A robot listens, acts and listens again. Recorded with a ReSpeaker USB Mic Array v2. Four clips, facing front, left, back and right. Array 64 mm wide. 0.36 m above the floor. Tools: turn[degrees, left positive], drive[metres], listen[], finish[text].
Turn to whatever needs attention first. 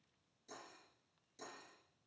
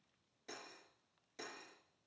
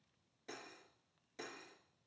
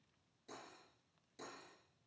Action: listen[]
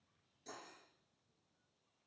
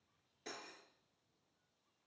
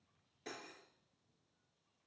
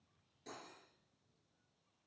Action: listen[]
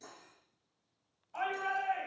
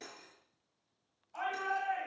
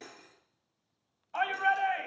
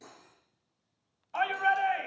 Thought: The shout: 130° right.
Action: turn[-130]
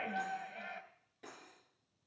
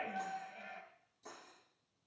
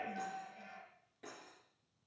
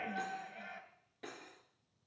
Action: finish[Found it: a shout, straight ahead, 2 to 4 m away.]